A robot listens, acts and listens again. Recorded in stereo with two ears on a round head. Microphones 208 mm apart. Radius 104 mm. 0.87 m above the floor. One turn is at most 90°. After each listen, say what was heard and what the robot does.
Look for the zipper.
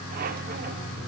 Keep listening.
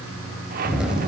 Turn 30° right.
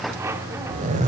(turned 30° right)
So it is at 145° right. Turn 90° right.
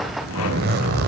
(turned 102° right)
The zipper is now 45° right. Turn 45° right.
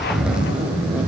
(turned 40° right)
Found it: a zipper, straight ahead, 1 to 2 m away.